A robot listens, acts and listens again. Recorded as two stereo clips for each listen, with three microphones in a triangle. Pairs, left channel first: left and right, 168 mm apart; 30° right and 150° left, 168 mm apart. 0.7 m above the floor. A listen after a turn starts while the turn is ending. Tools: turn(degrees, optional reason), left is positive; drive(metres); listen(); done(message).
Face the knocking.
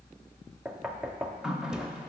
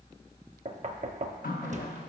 turn(degrees=-175, reason="The knocking: 175° right.")
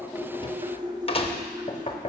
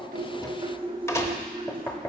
turn(degrees=40, reason="The knocking is now 40° left.")
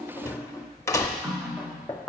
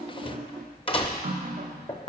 turn(degrees=20, reason="The knocking is now 20° left.")
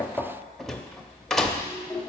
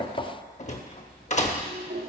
done("Found it: knocking, straight ahead.")